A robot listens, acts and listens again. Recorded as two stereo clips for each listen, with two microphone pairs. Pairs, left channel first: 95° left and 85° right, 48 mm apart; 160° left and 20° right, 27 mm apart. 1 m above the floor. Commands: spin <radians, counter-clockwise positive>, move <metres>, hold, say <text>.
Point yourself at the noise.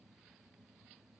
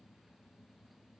hold
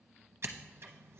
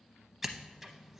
spin -1.83
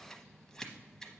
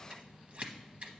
spin 0.26
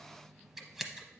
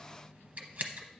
say Facing the scissors.